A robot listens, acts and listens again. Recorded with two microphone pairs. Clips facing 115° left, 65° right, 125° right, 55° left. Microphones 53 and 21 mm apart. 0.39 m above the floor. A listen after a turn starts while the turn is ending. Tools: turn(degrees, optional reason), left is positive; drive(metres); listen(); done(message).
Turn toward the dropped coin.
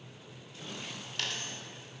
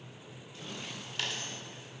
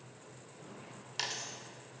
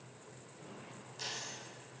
turn(degrees=-150, reason="The dropped coin: 150° right.")
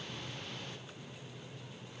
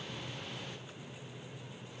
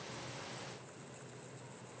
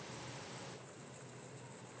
done("Facing where the dropped coin came from. I can't hear it now.")